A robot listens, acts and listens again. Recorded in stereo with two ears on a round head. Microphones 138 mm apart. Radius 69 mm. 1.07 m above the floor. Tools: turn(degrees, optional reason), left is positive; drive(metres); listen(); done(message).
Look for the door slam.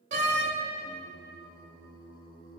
turn(degrees=-50, reason="The door slam: about 50° right or 130° right.")
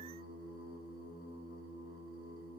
listen()
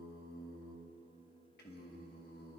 done("I heard a door slam, but can't make it out now. It was about straight ahead or 80° right.")